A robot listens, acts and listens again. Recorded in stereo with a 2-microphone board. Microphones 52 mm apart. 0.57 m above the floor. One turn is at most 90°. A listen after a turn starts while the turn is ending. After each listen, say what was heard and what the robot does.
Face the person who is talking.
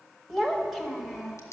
Turn 30° left.
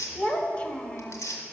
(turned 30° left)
So it is at 155° left. Turn 90° left.
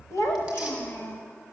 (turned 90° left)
The child speaking is now 55° left. Turn 55° left.
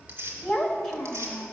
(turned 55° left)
Found it: a child speaking, straight ahead, 1 to 2 m away.